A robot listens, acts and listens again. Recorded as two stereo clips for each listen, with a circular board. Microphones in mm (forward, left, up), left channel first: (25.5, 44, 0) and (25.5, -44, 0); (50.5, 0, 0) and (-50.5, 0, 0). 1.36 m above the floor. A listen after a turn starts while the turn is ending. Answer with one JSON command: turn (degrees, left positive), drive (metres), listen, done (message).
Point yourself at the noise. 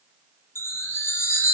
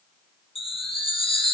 {"turn": 25}
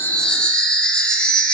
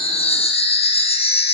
{"turn": 10}
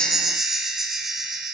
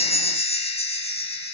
{"done": "Facing the chime."}